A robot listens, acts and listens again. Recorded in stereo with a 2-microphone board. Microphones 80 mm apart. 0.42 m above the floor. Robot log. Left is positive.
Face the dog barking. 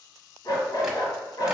note: The dog barking: about 60° left or 120° left.
cmd yaw +60
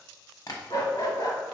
note: So it is at 60° left.
cmd yaw +60
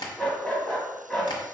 note: The dog barking is now 10° left.
cmd yaw +10
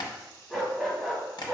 end: Facing the dog barking.